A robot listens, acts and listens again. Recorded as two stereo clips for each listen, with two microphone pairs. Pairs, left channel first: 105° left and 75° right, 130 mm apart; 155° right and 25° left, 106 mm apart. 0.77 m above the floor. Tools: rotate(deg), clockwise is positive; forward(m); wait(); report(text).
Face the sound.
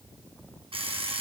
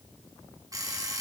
rotate(30)
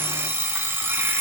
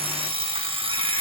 report("Facing the alarm clock.")